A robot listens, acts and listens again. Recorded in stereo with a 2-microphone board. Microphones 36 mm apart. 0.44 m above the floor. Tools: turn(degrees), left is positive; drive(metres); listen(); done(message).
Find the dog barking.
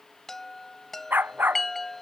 turn(degrees=-65)
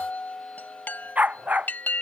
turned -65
turn(degrees=-45)
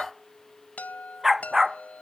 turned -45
turn(degrees=-10)
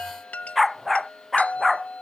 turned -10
done("Found it: a dog barking, straight ahead.")